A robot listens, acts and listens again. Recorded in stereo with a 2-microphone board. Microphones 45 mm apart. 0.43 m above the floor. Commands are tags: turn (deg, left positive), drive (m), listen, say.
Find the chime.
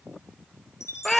<turn deg="90"/>
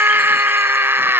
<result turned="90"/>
<listen/>
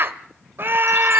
<listen/>
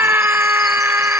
<say>Facing where the chime came from. I can't hear it now.</say>